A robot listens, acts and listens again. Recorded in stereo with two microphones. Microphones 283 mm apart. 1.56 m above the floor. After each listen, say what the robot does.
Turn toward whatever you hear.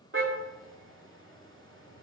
Turn 45° right.
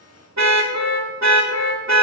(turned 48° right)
Turn 80° right.
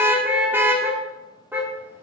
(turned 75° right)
Turn 10° right.
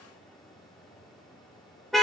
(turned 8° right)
Facing the car horn.